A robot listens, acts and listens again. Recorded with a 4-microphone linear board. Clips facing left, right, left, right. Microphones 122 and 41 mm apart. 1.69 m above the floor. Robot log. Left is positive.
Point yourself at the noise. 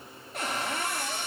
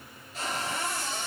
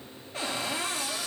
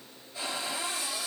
note: The cupboard door: about 60° left or 120° left.
cmd yaw +60
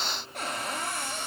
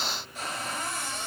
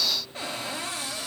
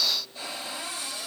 note: So it is at 60° left.
cmd yaw +60
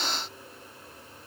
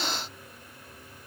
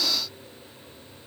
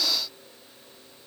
cmd idle
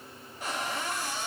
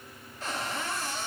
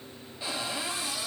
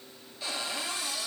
note: The cupboard door is now 15° left.
cmd yaw +15
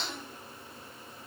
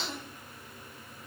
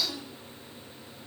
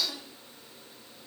end: Found it: a cupboard door, straight ahead.